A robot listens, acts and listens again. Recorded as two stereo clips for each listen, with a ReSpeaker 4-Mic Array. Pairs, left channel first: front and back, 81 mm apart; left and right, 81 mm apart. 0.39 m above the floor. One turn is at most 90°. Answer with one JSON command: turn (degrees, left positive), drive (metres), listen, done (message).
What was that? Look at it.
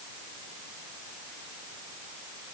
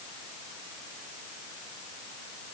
{"listen": true}
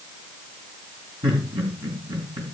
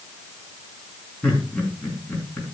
{"turn": 90}
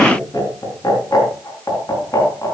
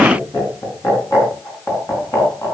{"turn": 40}
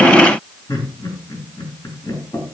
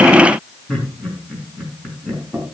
{"turn": 10}
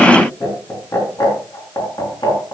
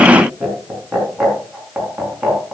{"done": "Facing the laughter."}